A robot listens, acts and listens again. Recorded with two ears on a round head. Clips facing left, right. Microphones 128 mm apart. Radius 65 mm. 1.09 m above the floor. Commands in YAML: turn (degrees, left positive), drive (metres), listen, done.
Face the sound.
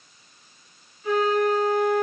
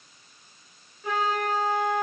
turn: -50
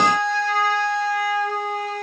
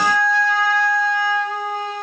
turn: -80
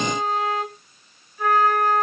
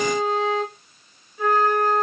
turn: -20
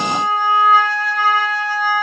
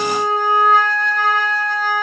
done: "Found it: a flute, straight ahead, 2 to 4 m away."